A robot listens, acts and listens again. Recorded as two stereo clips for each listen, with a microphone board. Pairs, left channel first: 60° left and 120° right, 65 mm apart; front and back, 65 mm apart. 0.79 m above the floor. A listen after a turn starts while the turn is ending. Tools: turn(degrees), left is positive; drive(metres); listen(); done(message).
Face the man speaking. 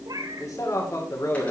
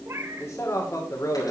turn(degrees=30)
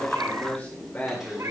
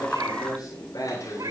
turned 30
done("Found it: a man speaking, straight ahead, 2 to 4 m away.")